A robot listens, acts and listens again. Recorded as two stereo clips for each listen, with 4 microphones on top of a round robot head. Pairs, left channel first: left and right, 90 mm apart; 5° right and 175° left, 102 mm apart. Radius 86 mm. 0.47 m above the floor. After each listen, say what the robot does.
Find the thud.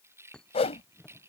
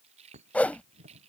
Turn 170° left.
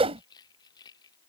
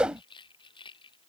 I heard a thud from this way, but can't make it out now.